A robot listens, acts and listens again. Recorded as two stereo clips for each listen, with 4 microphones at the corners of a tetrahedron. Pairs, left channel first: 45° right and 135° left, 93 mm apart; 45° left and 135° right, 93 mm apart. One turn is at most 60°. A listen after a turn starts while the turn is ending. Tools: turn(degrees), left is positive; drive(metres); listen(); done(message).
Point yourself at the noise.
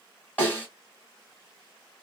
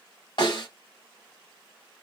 turn(degrees=25)
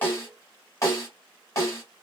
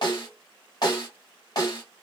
turn(degrees=10)
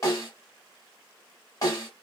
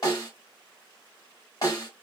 done("Found it: a snare drum, straight ahead, 1 to 2 m away.")